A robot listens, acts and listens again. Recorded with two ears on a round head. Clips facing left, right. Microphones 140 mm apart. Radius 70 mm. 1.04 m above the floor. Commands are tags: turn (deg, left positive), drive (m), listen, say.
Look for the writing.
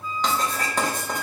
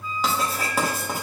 <turn deg="-30"/>
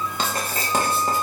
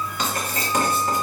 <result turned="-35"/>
<turn deg="30"/>
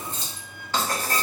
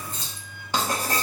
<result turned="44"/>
<turn deg="-15"/>
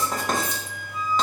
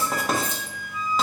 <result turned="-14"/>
<say>Facing the writing, under 1 m away.</say>